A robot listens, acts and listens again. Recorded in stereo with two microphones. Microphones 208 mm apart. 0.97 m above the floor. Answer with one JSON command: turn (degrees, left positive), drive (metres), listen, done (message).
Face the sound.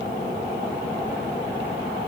{"listen": true}
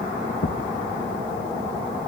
{"turn": 90}
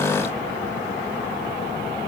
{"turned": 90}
{"done": "I heard a thud from this way, but can't make it out now."}